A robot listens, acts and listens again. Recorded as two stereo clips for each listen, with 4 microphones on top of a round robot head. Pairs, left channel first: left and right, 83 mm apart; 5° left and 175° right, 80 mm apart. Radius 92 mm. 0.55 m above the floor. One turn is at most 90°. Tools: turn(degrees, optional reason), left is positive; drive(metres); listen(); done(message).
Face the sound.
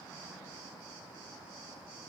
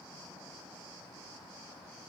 listen()
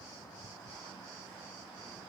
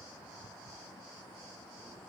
listen()
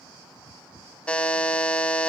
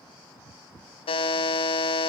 turn(degrees=10, reason="The buzzer: 10° left.")
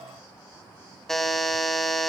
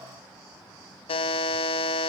done("Found it: a buzzer, straight ahead.")